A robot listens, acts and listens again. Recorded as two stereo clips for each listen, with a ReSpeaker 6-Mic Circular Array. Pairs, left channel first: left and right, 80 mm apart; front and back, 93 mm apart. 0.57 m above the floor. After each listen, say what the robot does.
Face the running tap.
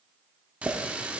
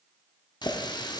Turn 20° right.
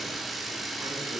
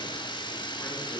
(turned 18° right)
Found it: a running tap, straight ahead.